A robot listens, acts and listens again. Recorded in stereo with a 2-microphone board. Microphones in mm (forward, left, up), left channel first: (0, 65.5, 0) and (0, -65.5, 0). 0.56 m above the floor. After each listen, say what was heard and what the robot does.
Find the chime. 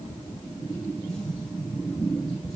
Keep listening.
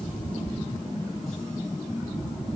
Keep listening.
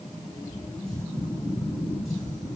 I can't make out a chime.